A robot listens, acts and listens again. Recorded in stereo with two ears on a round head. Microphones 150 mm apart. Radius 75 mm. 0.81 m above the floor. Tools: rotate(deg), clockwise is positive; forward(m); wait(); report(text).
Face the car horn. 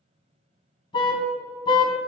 rotate(-30)
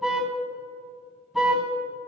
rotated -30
report("Found it: a car horn, straight ahead.")